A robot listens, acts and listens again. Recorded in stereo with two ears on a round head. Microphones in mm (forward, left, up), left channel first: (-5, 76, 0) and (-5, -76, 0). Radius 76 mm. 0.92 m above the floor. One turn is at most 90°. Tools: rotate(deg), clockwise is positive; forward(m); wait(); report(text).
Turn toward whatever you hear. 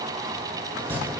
rotate(30)
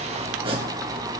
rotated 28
rotate(90)
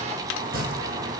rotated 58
rotate(80)
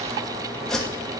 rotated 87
report("Facing the chopping.")